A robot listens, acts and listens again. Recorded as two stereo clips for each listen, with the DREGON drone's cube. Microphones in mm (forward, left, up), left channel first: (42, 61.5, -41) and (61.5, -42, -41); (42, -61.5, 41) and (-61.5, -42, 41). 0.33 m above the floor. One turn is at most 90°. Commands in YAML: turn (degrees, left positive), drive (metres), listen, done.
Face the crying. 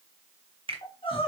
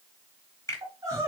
turn: 90
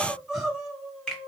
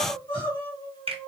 turn: 10
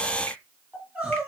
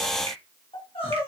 done: "Facing the crying, 2 to 4 m away."